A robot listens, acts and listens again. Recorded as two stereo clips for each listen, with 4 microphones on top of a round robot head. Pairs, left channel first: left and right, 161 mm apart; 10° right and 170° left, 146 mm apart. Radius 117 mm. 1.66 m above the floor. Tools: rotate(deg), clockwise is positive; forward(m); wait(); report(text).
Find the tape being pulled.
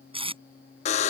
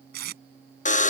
rotate(150)
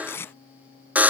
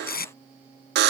rotate(-10)
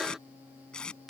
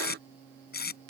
report("Facing the tape being pulled.")